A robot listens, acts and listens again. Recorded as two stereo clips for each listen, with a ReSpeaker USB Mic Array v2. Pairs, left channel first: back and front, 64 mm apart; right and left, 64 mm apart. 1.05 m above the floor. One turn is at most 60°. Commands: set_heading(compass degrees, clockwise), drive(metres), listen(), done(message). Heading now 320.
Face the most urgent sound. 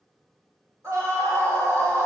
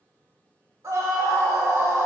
set_heading(275)
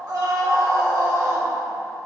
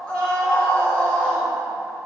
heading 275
set_heading(295)
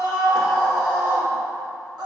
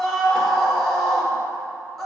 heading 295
done("Found it: a scream, straight ahead, 1 to 2 m away.")